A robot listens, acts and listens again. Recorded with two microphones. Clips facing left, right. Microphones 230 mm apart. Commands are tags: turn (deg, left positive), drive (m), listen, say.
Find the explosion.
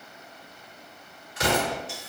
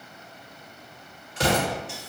<turn deg="-30"/>
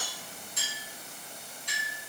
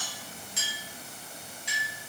<listen/>
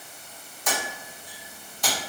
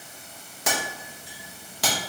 <say>I heard an explosion, but can't make it out now. It was about straight ahead or 120° right.</say>